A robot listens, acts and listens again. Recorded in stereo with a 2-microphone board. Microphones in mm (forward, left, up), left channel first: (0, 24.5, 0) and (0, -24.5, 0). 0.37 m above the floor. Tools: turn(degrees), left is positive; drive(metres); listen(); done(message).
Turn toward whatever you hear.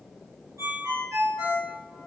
turn(degrees=-90)
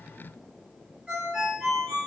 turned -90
turn(degrees=-10)
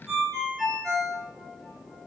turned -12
done("Found it: a ringtone, straight ahead, 1 to 2 m away.")